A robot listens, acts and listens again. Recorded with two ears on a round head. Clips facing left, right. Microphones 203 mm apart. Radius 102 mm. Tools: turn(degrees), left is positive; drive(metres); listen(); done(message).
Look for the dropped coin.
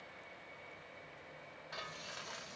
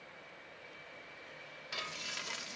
listen()
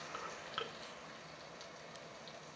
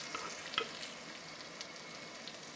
listen()
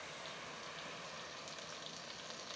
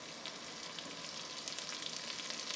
done("I can't make out a dropped coin, only frying.")